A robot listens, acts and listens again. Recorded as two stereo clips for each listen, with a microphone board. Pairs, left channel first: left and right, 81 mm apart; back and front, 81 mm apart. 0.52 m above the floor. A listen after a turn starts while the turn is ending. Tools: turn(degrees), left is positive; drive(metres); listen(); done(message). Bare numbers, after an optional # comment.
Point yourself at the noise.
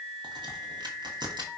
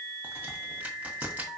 # The crack: 70° right.
turn(-70)
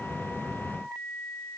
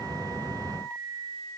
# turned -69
done("Facing where the crack came from. I can't hear it now.")